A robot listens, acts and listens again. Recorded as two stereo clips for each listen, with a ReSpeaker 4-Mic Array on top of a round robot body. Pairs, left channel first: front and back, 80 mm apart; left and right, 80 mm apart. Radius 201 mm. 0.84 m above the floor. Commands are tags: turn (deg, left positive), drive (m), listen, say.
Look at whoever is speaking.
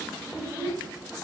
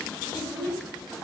<turn deg="-115"/>
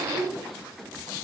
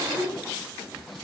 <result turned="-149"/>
<turn deg="35"/>
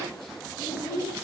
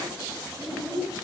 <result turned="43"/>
<turn deg="-10"/>
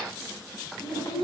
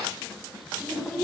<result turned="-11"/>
<say>Facing the child speaking, over 4 m away.</say>